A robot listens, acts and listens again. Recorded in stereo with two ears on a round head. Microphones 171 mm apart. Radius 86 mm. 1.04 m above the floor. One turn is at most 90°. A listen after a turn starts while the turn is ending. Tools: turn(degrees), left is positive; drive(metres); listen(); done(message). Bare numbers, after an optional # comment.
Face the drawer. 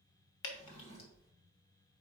# The drawer: about 50° left or 130° left.
turn(50)
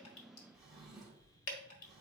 done("Facing the drawer.")